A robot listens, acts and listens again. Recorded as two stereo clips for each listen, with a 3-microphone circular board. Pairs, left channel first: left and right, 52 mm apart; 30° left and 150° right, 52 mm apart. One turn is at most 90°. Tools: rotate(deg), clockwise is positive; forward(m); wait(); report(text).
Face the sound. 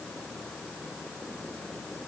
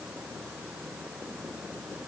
wait()
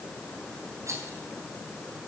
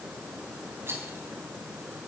rotate(90)
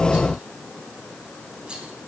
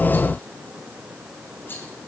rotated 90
rotate(15)
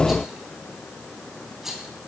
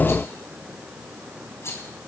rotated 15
report("Facing the rattle.")